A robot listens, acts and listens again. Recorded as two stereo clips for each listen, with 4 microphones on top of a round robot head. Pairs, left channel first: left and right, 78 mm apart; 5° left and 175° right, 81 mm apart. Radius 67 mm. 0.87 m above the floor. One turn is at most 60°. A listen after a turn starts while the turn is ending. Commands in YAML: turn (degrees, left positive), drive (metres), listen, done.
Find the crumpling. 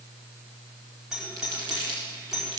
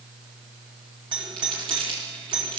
turn: -60
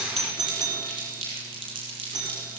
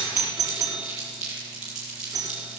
turn: -60
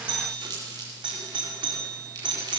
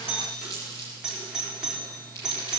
turn: -60
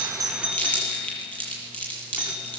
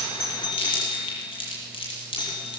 turn: 20
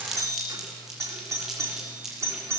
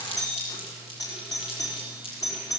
done: "Found it: crumpling, straight ahead."